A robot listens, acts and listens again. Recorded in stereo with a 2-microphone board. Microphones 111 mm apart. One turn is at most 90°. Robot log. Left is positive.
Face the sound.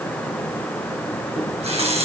note: The running tap: about 75° right or 105° right.
cmd yaw -75
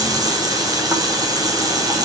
note: So it is at 35° right.
cmd yaw -35
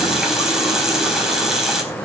end: Found it: a running tap, straight ahead, over 4 m away.